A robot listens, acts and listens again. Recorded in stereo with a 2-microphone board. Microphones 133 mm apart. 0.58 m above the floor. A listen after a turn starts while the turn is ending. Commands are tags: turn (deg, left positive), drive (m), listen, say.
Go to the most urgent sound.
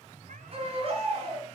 <turn deg="-45"/>
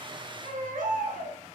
<turn deg="-90"/>
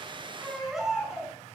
<drive m="1.0"/>
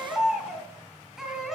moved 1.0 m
<drive m="1.0"/>
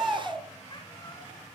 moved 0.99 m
<drive m="1.0"/>
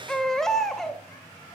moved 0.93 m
<drive m="1.0"/>
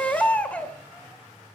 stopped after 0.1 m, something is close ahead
<turn deg="10"/>
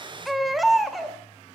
<say>I am next to the baby crying.</say>